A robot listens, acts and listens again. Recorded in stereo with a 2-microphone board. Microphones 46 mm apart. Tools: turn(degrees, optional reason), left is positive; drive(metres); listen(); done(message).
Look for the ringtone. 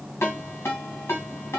turn(degrees=90)
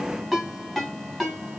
done("Found it: a ringtone, straight ahead, 2 to 4 m away.")